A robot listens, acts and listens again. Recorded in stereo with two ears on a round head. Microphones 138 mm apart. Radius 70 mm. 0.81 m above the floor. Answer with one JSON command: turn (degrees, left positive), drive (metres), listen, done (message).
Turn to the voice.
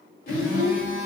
{"turn": 55}
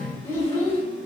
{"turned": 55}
{"turn": 20}
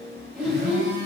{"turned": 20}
{"done": "Facing the child speaking, under 1 m away."}